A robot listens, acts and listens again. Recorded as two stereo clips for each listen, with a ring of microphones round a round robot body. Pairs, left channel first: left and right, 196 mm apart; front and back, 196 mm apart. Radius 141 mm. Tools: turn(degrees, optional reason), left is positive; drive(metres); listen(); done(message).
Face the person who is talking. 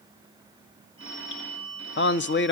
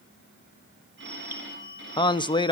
turn(degrees=70, reason="The man speaking: 70° left.")
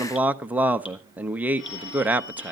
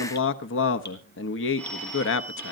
done("Facing the man speaking, under 1 m away.")